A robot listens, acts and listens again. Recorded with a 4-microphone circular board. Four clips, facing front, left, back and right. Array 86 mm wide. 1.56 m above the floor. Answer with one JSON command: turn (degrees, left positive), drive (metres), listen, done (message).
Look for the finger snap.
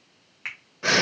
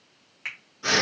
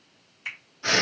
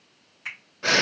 {"turn": 20}
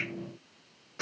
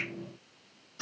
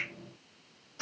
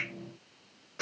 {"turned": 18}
{"listen": true}
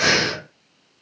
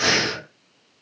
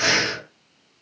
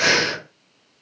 {"listen": true}
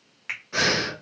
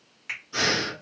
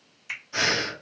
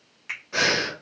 {"done": "Facing the finger snap, 1 to 2 m away."}